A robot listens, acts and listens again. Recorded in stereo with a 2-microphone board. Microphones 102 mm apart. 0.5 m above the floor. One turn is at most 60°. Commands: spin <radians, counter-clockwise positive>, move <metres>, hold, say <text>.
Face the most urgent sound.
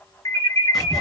spin 0.61
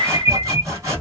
spin 1.05
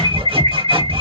spin 0.61
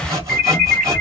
say Facing the alarm, under 1 m away.